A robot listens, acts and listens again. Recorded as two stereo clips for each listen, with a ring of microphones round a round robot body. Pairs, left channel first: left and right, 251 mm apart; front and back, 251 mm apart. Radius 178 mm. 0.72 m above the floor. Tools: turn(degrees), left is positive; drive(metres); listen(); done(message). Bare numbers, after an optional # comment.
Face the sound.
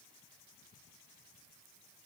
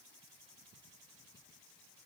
listen()
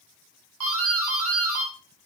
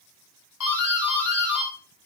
# The doorbell: 50° right.
turn(-50)
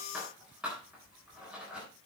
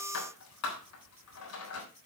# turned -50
done("Found it: a doorbell, straight ahead.")